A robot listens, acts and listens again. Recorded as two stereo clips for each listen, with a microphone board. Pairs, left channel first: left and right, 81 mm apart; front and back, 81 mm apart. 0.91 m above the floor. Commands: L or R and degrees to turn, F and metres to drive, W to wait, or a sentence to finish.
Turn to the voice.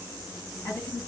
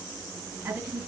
L130
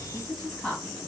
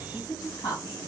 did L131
Found it: a woman speaking, straight ahead.